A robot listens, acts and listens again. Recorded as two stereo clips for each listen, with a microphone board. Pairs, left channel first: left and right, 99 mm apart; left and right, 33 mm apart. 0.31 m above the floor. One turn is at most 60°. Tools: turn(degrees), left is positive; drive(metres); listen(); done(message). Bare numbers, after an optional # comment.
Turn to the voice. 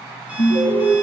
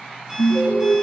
listen()
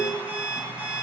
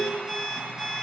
listen()
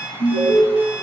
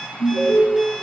done("I can't make out anyone speaking to turn to.")